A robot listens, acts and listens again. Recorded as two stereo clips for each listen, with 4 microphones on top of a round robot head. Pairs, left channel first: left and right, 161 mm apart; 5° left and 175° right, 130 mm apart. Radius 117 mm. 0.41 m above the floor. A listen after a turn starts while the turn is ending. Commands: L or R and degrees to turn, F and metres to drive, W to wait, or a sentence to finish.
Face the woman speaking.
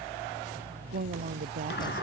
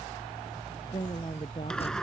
R60
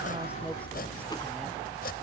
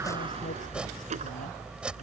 W
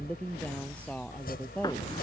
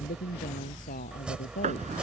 L10
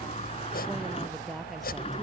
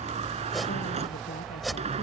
W
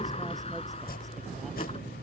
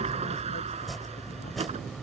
W
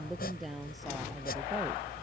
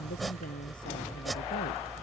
Found it: a woman speaking, straight ahead.